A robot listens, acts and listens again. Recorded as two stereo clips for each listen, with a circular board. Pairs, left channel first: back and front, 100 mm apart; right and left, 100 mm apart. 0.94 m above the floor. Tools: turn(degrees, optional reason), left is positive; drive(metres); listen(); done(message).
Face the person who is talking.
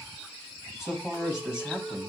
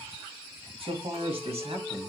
turn(degrees=80, reason="The man speaking: 80° left.")
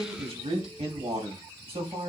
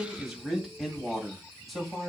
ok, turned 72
done("Facing the man speaking, 2 to 4 m away.")